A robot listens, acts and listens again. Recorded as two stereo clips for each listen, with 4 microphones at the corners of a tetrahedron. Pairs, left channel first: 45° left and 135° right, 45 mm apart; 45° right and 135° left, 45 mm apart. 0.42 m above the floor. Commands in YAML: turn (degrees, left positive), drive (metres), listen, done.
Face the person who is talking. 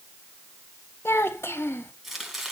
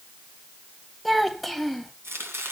turn: 45
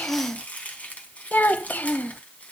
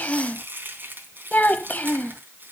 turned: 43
done: "Found it: a child speaking, straight ahead."